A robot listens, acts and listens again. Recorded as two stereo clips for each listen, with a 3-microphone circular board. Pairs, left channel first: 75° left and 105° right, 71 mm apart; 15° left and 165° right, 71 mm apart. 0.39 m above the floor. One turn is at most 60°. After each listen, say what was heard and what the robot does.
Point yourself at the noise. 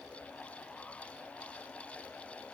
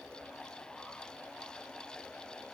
Keep listening.
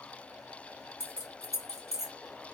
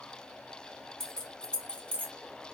The keys jangling: 75° left. Turn 60° left.
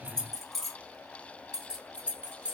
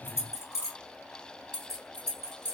The keys jangling is now 30° right. Turn 30° right.
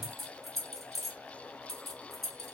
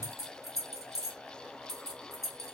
The keys jangling is now 15° right. Turn 15° right.
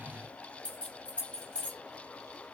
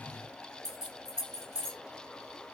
Facing the keys jangling.